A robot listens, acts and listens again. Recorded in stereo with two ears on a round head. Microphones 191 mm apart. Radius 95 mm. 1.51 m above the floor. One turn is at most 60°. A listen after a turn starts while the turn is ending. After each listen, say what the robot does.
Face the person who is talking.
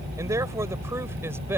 Turn 30° right.
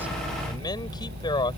Turn 20° left.
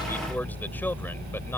Turn 10° left.
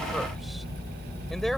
Keep listening.
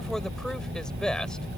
Facing the man speaking.